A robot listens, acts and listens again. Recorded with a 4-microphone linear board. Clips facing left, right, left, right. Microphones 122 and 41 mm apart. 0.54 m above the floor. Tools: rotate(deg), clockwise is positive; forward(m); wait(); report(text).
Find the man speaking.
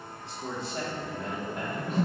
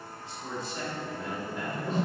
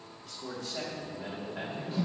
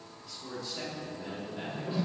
rotate(-55)
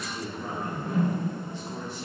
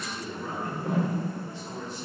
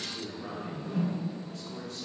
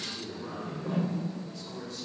rotate(-70)
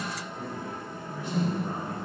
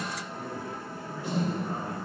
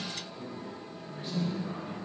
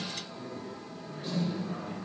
rotate(-20)
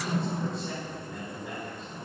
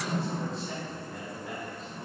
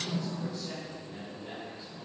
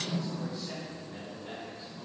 report("Found it: a man speaking, straight ahead.")